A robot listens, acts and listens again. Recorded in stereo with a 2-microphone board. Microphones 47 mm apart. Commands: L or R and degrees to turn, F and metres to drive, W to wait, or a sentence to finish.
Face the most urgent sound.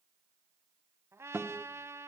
W
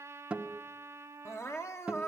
L75
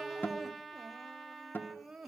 Found it: crying, straight ahead.